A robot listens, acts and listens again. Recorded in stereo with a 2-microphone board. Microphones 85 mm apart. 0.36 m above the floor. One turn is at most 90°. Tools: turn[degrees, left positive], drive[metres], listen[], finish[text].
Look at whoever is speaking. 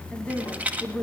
Thought: The woman speaking: about 15° left or 165° left.
Action: turn[15]
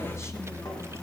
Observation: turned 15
Action: listen[]
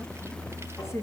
Thought: So it is at 145° left.
Action: turn[90]
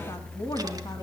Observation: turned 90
Thought: The woman speaking is now 55° left.
Action: turn[55]
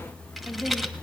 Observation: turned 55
Action: finish[Found it: a woman speaking, straight ahead, 2 to 4 m away.]